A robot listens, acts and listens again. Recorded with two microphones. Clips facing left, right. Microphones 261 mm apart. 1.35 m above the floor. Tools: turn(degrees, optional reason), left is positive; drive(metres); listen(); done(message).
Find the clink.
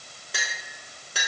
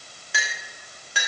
turn(degrees=40, reason="The clink: about 40° left or 140° left.")
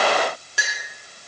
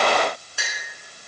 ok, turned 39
turn(degrees=100, reason="So it is at 100° left.")
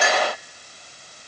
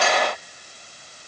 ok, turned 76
turn(degrees=20, reason="The clink is now 20° left.")
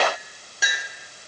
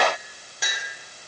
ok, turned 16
done("Facing the clink, 2 to 4 m away.")